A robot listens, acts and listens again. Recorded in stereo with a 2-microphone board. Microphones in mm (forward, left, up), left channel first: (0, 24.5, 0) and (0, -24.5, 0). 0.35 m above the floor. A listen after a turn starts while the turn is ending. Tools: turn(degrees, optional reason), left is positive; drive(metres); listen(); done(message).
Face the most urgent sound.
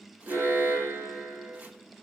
turn(degrees=-90)
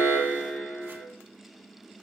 done("Facing the alarm, over 4 m away.")